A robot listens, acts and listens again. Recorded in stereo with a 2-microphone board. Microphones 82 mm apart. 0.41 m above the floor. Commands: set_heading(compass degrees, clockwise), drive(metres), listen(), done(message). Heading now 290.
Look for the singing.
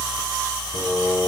set_heading(230)
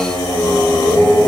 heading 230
set_heading(190)
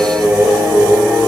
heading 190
set_heading(210)
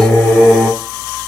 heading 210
done("Facing the singing, over 4 m away.")